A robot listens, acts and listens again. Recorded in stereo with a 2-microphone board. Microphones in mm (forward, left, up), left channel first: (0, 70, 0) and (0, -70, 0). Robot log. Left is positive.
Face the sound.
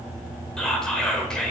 cmd yaw +30
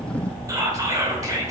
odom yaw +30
note: So it is at 25° right.
cmd yaw -25
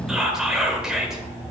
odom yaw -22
end: Found it: whispering, straight ahead, 1 to 2 m away.